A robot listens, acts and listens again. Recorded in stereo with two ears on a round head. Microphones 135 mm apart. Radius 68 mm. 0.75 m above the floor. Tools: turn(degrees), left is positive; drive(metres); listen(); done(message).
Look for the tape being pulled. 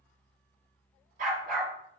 listen()
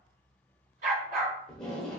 turn(degrees=30)
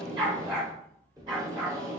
turn(degrees=-25)
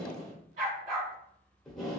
done("Found it: tape being pulled, straight ahead, under 1 m away.")